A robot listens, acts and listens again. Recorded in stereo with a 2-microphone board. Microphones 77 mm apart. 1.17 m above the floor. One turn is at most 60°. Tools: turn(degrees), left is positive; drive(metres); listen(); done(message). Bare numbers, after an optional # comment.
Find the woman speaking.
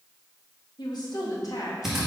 # The woman speaking: about 55° left or 125° left.
turn(55)
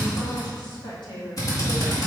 # So it is at 80° left.
turn(60)
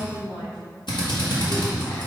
# The woman speaking is now 75° left.
turn(60)
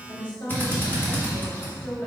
# The woman speaking is now 25° left.
turn(25)
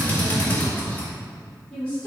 # The woman speaking is now 20° left.
turn(20)
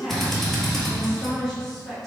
done("Found it: a woman speaking, straight ahead.")